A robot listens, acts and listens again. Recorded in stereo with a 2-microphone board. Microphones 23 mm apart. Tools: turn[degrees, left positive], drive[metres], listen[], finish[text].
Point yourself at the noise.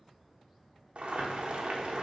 Thought: The boiling: about 65° right or 115° right.
Action: turn[-65]
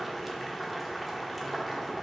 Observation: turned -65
Action: finish[Facing the boiling, 1 to 2 m away.]